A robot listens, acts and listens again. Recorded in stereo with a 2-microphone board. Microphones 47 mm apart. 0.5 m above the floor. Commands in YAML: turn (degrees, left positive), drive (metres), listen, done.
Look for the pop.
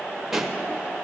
turn: -30
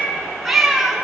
listen: true
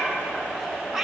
done: "I heard a pop, but can't make it out now. It was about 25° left or 145° right."